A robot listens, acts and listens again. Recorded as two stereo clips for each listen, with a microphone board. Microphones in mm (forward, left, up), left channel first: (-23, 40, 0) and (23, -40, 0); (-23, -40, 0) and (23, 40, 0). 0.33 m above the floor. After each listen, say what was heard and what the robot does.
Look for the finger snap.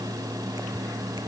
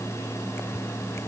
Keep listening.
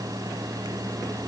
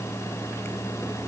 Keep listening.
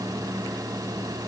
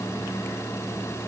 I can't make out a finger snap.